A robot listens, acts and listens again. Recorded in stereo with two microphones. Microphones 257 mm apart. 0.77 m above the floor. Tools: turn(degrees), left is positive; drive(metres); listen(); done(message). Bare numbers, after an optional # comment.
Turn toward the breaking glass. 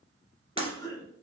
# The breaking glass: about 20° right or 160° right.
turn(-20)
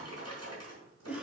listen()
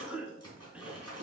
done("I heard breaking glass, but can't make it out now. It was about straight ahead or 140° right.")